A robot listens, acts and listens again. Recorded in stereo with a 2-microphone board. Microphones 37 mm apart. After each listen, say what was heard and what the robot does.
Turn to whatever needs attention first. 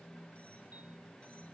Keep listening.
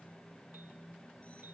Keep listening.
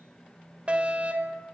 The fire alarm: about 35° right or 145° right. Turn 35° right.
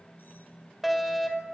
Facing the fire alarm, over 4 m away.